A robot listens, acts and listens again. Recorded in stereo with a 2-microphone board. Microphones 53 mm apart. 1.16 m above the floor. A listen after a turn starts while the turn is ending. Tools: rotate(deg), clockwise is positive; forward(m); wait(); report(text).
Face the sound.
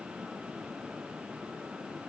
wait()
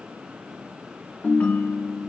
rotate(-25)
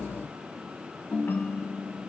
rotate(-130)
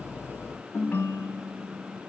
rotate(-35)
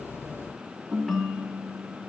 report("Facing the ringtone.")